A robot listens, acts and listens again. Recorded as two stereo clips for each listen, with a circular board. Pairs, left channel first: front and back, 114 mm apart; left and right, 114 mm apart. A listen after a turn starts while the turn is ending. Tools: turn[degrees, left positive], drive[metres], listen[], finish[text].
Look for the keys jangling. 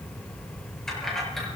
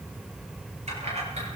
Thought: The keys jangling: 90° right.
Action: turn[-90]
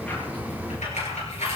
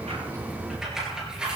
Thought: The keys jangling is now 10° right.
Action: turn[-10]
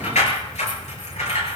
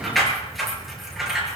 Action: finish[Found it: keys jangling, straight ahead.]